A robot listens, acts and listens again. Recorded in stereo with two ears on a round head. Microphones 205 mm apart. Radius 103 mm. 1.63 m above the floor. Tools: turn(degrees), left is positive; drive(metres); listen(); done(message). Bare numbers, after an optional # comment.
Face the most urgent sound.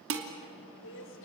# The crying: about 55° left or 125° left.
turn(55)
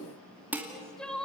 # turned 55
done("Facing the crying.")